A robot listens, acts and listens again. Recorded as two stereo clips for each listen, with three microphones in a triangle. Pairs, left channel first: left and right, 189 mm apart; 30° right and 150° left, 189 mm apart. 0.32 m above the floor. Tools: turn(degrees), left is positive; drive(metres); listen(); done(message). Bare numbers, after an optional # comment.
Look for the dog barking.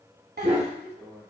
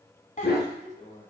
# The dog barking: 40° right.
turn(-40)
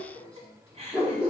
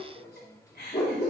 done("Facing the dog barking.")